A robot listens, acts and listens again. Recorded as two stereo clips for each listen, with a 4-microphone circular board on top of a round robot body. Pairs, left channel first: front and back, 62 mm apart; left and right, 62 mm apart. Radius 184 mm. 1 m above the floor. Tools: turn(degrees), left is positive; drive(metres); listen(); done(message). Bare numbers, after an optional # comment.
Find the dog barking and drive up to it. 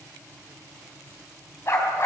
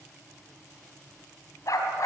# The dog barking: 50° left.
turn(50)
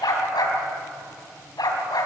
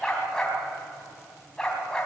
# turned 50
# The dog barking is now 10° left.
turn(10)
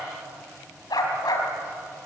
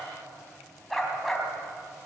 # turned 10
drive(1.0)
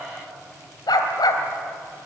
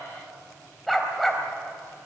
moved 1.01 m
drive(1.0)
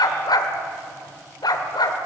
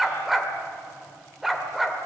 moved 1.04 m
drive(1.0)
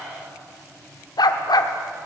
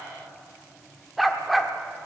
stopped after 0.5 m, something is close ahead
done("Arrived at the dog barking, straight ahead.")